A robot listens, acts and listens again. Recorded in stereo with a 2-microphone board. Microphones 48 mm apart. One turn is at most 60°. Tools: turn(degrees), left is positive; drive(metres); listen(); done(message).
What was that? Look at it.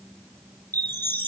turn(degrees=45)
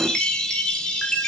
turn(degrees=15)
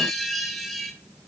done("Found it: a chime, straight ahead, 1 to 2 m away.")